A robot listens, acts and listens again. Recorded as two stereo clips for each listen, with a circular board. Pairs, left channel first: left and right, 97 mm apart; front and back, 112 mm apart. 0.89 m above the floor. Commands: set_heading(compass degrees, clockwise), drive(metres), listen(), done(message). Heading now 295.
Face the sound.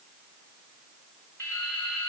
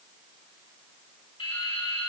set_heading(275)
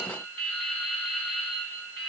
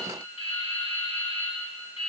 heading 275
done("Facing the dripping, 2 to 4 m away.")